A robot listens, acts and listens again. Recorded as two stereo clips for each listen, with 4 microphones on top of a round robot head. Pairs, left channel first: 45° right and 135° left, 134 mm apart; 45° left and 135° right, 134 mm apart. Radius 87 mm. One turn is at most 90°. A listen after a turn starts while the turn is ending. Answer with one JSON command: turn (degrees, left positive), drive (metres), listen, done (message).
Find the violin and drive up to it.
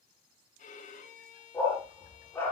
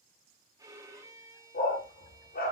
{"turn": -70}
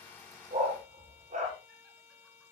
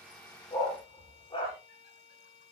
{"drive": 1.0}
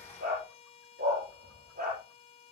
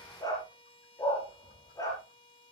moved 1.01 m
{"drive": 1.0}
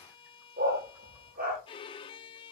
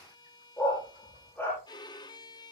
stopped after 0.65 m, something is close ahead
{"done": "I am next to the violin."}